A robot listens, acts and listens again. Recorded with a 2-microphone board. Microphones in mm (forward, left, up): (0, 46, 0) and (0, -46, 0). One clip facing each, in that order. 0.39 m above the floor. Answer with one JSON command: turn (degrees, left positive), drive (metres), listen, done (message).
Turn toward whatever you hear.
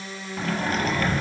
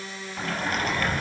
{"turn": -30}
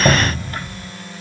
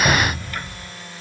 {"turn": 25}
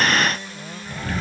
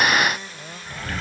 {"done": "Found it: a sliding door, straight ahead."}